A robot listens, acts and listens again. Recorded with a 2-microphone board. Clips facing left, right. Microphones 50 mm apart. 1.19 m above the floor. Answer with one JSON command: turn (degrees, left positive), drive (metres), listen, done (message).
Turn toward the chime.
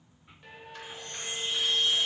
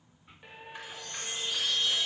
{"turn": 30}
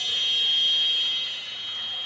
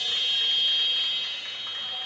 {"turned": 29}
{"done": "Facing the chime."}